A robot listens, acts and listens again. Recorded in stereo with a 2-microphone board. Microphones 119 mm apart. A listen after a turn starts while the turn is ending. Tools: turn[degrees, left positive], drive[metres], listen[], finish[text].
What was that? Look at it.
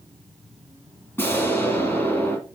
Thought: The explosion: about 20° left or 160° left.
Action: turn[20]
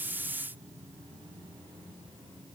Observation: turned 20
Action: listen[]
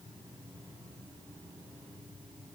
Action: finish[I heard an explosion, but can't make it out now. It was about straight ahead or 140° left.]